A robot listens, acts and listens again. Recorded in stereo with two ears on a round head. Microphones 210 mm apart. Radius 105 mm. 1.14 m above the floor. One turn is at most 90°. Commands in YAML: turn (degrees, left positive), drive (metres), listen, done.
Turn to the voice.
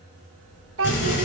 turn: -60
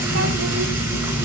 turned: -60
listen: true
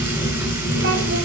listen: true
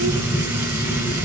done: "I heard a child speaking, but can't make it out now. It was about straight ahead or 60° right."